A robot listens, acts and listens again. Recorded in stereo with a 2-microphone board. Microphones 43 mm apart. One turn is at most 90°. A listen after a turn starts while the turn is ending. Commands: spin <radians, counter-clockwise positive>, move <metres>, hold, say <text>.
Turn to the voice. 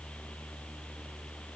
hold
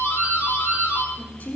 spin 0.79
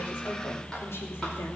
hold
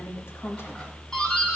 spin 1.57
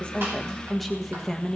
say Found it: a woman speaking, straight ahead.